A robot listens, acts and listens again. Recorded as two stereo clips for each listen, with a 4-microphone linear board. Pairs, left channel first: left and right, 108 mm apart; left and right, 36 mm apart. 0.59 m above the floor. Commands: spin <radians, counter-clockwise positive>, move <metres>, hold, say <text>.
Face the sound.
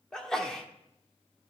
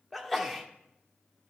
spin 0.52
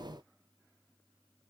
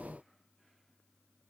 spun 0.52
hold
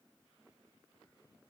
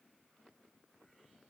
say I heard a sneeze, but can't make it out now. It was about 25° right or 145° left.